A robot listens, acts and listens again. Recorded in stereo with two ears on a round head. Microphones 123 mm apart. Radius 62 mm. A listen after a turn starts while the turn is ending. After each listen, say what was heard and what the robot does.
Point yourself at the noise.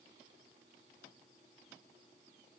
Keep listening.
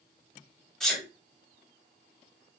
Turn 30° left.
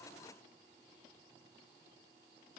Keep listening.
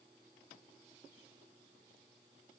I heard a sneeze, but can't make it out now. It was about 25° right or 145° left.